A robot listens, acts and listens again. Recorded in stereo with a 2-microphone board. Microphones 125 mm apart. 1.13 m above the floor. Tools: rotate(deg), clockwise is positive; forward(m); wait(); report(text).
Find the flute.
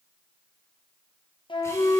rotate(-40)
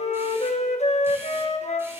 rotate(-90)
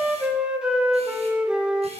rotate(10)
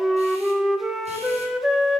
report("Found it: a flute, straight ahead.")